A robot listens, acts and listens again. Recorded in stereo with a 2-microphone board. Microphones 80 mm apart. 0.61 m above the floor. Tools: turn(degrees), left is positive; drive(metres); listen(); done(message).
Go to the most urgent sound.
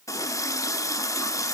listen()
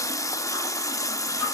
listen()
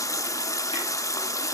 done("I can't make out anything urgent, only a running tap.")